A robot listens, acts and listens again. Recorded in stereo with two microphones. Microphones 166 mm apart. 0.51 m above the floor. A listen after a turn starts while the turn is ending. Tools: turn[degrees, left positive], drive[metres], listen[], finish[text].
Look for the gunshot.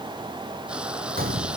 Thought: The gunshot: about 70° right or 110° right.
Action: turn[-70]
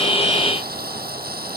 Action: listen[]
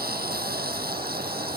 Action: finish[I heard a gunshot, but can't make it out now. It was about straight ahead or 40° right.]